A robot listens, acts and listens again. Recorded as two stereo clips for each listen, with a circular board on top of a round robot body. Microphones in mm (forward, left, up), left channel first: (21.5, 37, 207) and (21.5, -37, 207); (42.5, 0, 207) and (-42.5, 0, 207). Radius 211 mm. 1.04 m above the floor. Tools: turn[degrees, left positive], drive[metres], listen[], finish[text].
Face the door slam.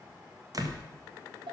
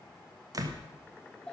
Thought: The door slam: 130° right.
Action: turn[-130]
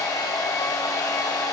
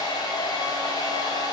Action: finish[I heard a door slam from this way, but can't make it out now.]